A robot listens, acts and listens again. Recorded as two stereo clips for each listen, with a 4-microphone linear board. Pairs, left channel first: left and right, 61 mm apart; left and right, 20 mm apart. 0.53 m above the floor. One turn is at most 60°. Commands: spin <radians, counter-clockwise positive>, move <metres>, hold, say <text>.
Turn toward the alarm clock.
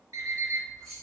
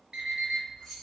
spin -1.05
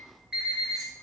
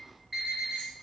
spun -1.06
say Facing the alarm clock, 1 to 2 m away.